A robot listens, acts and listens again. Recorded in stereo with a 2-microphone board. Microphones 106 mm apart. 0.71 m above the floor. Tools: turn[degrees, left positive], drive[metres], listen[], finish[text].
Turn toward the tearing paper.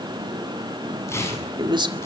Thought: The tearing paper: about 25° left or 155° left.
Action: turn[25]
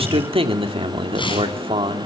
Thought: So it is at 130° left.
Action: turn[130]
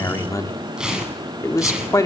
Action: finish[Found it: tearing paper, straight ahead.]